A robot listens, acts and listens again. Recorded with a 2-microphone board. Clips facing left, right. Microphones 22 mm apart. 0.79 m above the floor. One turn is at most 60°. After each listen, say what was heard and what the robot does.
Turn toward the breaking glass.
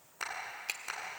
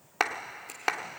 Keep listening.
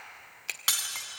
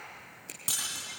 The breaking glass: about 55° left or 125° left. Turn 55° left.
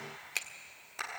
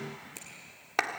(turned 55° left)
Keep listening.
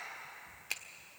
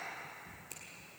I heard breaking glass, but can't make it out now. It was about straight ahead or 70° left.